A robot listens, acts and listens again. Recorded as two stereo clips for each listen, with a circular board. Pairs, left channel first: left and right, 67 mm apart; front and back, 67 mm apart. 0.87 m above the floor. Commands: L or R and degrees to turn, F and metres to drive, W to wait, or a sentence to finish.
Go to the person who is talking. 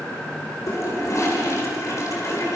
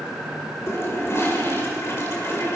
W
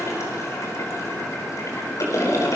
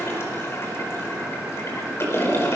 W
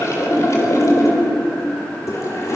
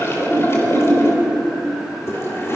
I can't make out anyone speaking to turn to.